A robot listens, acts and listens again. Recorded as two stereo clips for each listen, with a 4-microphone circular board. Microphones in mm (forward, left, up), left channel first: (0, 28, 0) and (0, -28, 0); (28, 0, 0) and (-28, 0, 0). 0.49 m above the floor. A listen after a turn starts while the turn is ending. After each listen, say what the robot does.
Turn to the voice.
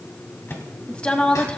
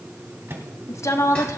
Turn 20° left.
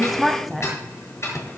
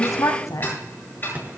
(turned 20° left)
Facing the woman speaking, 2 to 4 m away.